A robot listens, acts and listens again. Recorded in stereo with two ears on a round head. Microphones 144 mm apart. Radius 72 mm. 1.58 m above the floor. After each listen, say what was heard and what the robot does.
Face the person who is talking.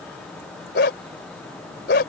Keep listening.
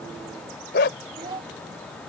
The child speaking: about 30° right or 150° right. Turn 30° right.
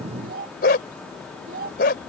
So it is at 120° right. Turn 120° right.
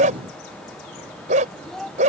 Facing the child speaking.